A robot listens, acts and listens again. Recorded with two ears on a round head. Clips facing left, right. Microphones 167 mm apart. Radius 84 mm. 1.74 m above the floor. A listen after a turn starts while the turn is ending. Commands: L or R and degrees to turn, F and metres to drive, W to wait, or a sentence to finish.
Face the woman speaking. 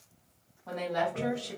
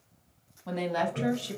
R35
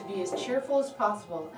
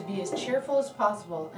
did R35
R125
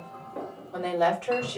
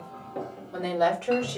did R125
R35
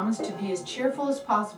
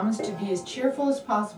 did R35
Found it: a woman speaking, straight ahead, 2 to 4 m away.